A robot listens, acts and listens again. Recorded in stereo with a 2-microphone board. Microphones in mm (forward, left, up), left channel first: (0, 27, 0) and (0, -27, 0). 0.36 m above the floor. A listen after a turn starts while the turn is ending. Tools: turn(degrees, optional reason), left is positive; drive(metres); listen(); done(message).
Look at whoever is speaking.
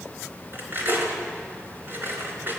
listen()
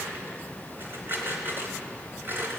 listen()
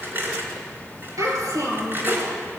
turn(degrees=-90)
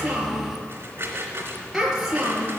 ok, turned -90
done("Facing the child speaking.")